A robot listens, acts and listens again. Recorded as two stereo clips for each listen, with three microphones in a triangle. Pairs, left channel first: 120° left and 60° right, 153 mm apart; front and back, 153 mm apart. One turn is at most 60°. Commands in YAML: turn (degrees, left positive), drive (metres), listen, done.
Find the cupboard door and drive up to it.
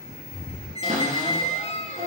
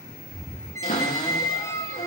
turn: -25
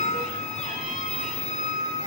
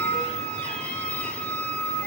listen: true
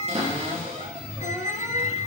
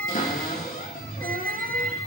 turn: -15
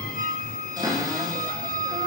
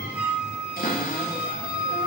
drive: 1.0
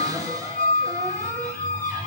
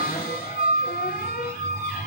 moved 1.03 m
drive: 1.0
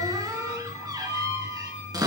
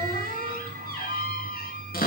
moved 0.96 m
drive: 1.0
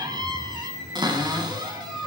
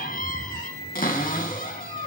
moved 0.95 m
drive: 1.0
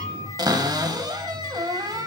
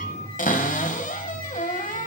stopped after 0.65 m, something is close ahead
done: "I am next to the cupboard door."